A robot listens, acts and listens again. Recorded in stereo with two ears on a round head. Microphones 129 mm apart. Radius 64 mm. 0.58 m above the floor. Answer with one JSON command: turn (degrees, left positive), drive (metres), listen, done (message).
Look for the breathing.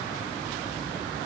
{"listen": true}
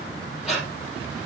{"turn": 30}
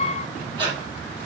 {"turn": -35}
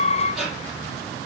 {"done": "Found it: breathing, straight ahead, 2 to 4 m away."}